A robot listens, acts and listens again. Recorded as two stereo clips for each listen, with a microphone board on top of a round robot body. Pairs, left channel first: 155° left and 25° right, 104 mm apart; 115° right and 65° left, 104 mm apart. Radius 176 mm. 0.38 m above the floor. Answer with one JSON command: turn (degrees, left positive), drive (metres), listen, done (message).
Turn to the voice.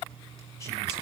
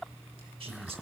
{"listen": true}
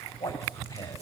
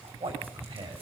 {"turn": 95}
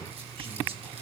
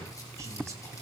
{"listen": true}
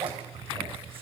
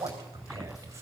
{"turn": 10}
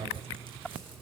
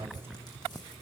{"listen": true}
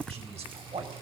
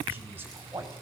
{"done": "Facing the man speaking."}